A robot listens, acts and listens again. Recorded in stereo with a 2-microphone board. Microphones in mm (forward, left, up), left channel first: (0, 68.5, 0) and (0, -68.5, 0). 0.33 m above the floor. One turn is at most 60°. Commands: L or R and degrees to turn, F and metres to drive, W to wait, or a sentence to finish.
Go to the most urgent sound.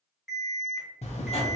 L30
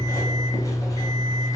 W
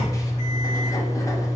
W
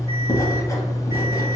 I heard an alarm, but can't make it out now. It was about 25° right or 145° left. I did not reach it.